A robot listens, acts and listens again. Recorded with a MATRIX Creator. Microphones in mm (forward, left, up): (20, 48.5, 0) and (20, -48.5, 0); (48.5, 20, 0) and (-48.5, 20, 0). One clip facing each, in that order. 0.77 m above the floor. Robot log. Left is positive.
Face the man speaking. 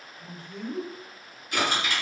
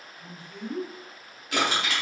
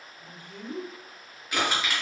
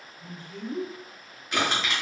note: The man speaking: 40° left.
cmd yaw +40
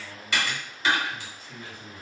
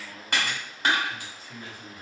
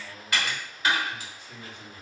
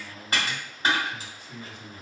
end: Facing the man speaking, 1 to 2 m away.